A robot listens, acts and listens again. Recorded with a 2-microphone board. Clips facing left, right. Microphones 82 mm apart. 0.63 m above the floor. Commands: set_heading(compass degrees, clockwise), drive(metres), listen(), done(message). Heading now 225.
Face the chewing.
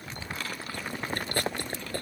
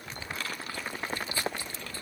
set_heading(170)
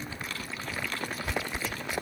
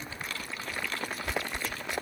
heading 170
done("Facing the chewing.")